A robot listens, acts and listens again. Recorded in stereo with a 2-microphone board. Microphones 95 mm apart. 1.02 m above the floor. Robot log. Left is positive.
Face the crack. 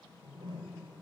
cmd idle
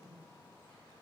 cmd idle
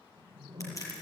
note: The crack: about 40° left or 140° left.
cmd yaw +40
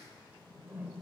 cmd idle
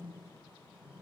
end: I heard a crack, but can't make it out now. It was about straight ahead or 100° left.